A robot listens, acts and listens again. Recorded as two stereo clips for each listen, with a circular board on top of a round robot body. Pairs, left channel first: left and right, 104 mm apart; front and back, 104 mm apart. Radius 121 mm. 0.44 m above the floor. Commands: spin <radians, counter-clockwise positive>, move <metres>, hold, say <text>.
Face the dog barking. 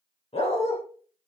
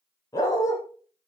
spin 1.05
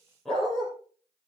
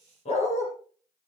say Facing the dog barking.